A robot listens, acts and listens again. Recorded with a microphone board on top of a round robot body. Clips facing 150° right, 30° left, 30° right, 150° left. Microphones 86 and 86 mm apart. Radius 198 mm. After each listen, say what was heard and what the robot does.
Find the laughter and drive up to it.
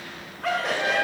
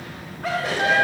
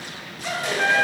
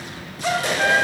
The laughter: 120° left. Turn 120° left.
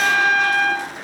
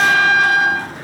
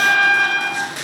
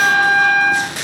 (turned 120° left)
Keep listening.
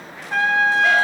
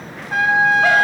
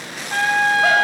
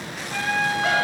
Keep listening.
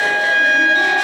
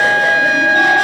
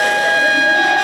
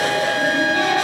Facing where the laughter came from. I can't hear it now. I did not reach it.